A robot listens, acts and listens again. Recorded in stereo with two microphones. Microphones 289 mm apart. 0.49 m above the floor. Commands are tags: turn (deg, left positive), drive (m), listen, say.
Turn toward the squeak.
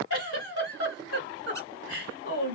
<listen/>
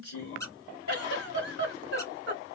<turn deg="30"/>
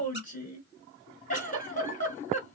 <listen/>
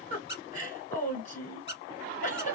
<turn deg="140"/>
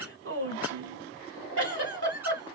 <listen/>
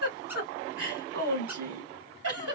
<listen/>
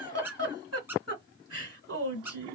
<turn deg="-10"/>
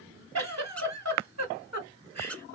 <say>Found it: a squeak, straight ahead.</say>